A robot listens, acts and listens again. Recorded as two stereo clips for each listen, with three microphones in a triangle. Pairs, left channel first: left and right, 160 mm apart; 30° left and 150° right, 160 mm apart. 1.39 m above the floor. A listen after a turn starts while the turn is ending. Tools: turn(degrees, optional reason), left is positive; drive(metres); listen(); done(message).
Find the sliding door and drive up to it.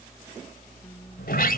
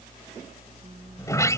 turn(degrees=100, reason="The sliding door: 100° left.")
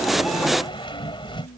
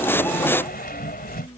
turn(degrees=35, reason="The sliding door is now 35° left.")
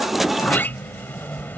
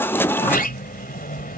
turn(degrees=10, reason="The sliding door is now 10° left.")
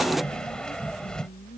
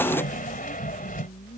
drive(metres=1.0)
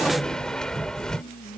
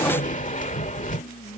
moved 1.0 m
drive(metres=1.0)
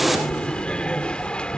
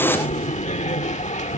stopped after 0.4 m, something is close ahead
turn(degrees=10, reason="The sliding door is now 10° left.")
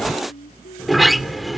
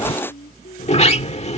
done("I am next to the sliding door.")